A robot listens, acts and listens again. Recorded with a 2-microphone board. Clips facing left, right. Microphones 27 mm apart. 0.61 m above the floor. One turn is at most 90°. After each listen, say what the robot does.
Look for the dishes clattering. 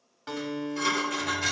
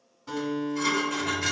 Turn 30° left.
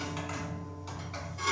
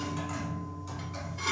Keep listening.
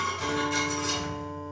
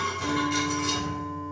Keep listening.
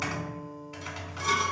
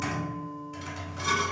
I heard dishes clattering, but can't make it out now. It was about 25° right or 145° left.